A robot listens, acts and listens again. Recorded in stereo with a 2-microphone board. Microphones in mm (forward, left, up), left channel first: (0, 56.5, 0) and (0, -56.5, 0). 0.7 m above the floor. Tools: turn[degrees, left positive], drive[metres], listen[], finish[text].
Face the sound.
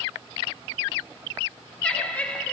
Action: turn[30]
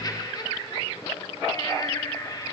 Thought: So it is at 135° left.
Action: turn[135]
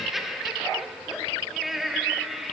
Action: finish[Facing the laughter.]